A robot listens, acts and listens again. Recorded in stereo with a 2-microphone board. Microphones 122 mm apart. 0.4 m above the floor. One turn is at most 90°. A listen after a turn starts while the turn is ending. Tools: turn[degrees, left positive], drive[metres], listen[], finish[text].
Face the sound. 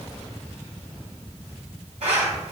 Thought: The zipper: about 65° right or 115° right.
Action: turn[-65]
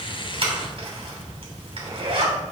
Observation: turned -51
Thought: So it is at 50° right.
Action: turn[-50]
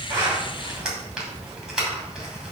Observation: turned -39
Thought: The zipper is now 10° right.
Action: turn[-10]
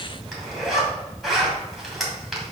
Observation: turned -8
Action: finish[Found it: a zipper, straight ahead.]